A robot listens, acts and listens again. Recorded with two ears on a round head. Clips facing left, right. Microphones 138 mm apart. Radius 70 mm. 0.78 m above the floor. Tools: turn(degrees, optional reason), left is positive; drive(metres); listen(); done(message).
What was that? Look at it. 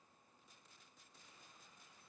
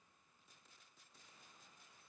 listen()
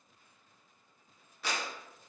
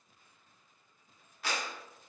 turn(degrees=90)
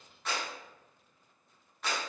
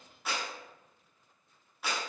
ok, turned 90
done("Facing the clap, under 1 m away.")